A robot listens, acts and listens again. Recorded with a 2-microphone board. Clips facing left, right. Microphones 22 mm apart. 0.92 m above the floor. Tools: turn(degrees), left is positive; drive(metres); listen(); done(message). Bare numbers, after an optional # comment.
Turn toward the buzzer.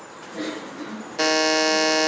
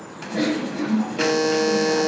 # The buzzer: about 30° left or 150° left.
turn(30)
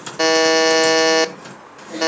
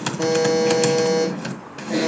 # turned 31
# So it is at 120° left.
turn(120)
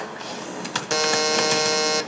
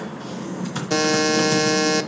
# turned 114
done("Facing the buzzer.")